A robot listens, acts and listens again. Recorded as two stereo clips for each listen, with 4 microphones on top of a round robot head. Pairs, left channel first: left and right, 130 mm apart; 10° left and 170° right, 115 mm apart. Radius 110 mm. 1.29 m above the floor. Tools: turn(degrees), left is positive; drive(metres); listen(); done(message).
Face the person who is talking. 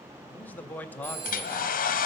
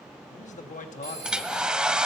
turn(degrees=10)
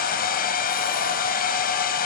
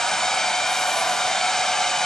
listen()
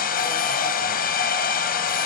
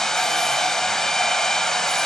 listen()
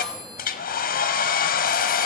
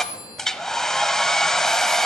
done("I heard a man speaking from this way, but can't make it out now.")